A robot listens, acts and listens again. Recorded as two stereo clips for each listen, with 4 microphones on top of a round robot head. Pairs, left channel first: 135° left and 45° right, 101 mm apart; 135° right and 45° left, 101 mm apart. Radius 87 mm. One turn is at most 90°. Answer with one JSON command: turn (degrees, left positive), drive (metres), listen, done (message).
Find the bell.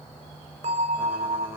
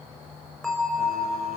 {"turn": -45}
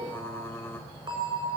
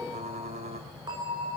{"done": "Facing the bell."}